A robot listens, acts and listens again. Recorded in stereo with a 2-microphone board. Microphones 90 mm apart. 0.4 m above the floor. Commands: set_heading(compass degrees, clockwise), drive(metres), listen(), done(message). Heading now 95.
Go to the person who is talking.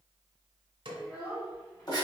set_heading(70)
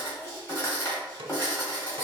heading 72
listen()
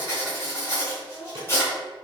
drive(1.0)
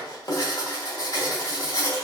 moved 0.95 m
listen()
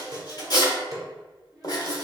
drive(1.0)
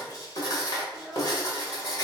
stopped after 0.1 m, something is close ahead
done("I am next to the child speaking.")